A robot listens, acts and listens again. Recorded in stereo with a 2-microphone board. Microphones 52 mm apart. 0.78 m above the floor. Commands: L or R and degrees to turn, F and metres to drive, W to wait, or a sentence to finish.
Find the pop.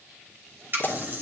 L45
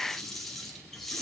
W
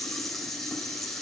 I heard a pop, but can't make it out now. It was about straight ahead or 90° left.